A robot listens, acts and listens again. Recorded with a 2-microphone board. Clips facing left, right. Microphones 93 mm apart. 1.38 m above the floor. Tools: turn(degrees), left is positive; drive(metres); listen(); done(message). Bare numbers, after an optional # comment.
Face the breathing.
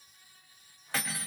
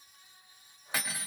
listen()
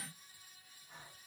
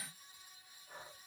# The breathing: about 45° right or 135° right.
turn(-45)
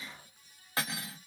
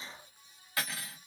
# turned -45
done("Found it: breathing, straight ahead, 1 to 2 m away.")